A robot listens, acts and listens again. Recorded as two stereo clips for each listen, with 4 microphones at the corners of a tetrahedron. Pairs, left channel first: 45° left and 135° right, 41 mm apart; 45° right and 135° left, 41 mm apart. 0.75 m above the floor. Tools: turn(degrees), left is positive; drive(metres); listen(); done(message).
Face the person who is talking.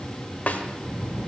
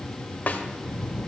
turn(degrees=-155)
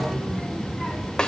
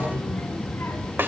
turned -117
turn(degrees=-35)
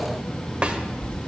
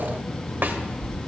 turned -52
turn(degrees=15)
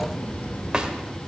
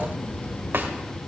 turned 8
done("Facing the child speaking, 2 to 4 m away.")